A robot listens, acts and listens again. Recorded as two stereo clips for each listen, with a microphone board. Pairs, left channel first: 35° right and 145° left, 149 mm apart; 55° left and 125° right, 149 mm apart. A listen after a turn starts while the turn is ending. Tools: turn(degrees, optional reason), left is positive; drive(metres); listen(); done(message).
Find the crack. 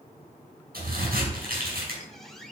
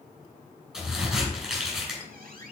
turn(degrees=150, reason="The crack: 150° left.")
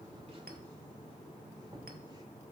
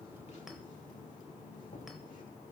done("I heard a crack from this way, but can't make it out now.")